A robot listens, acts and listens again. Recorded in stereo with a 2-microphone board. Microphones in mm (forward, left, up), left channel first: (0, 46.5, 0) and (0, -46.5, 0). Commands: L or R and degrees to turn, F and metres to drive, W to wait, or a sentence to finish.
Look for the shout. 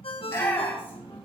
L20
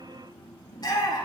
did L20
L140
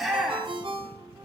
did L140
Found it: a shout, straight ahead.